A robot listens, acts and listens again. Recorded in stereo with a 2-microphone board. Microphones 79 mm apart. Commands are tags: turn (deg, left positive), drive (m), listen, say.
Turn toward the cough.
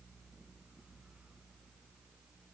<listen/>
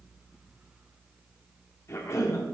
<turn deg="40"/>
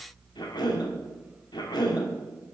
<turn deg="100"/>
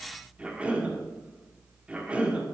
<turn deg="-15"/>
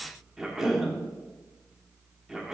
<say>Found it: a cough, straight ahead, 1 to 2 m away.</say>